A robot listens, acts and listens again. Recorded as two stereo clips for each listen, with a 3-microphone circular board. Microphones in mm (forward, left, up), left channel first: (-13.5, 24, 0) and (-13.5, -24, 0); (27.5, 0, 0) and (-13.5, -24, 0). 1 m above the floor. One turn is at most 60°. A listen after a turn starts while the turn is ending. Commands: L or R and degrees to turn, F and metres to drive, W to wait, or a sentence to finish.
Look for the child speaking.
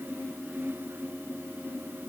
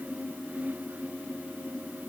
W
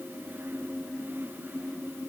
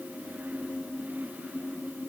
W
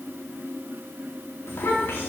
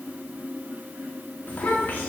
L60
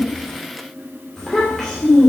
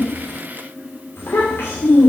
L10
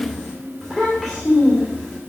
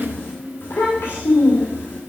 Found it: a child speaking, straight ahead, 2 to 4 m away.